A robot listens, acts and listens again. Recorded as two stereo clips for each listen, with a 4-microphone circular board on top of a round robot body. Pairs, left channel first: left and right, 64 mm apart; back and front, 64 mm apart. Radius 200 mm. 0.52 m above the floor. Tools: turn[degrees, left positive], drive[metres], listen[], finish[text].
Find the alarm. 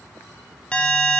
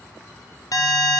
Thought: The alarm: 160° left.
Action: turn[160]
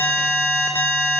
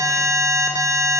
Thought: The alarm is now 35° left.
Action: turn[35]
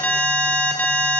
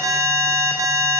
Thought: The alarm is now 20° left.
Action: turn[20]
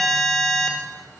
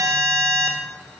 Action: finish[Found it: an alarm, straight ahead, 1 to 2 m away.]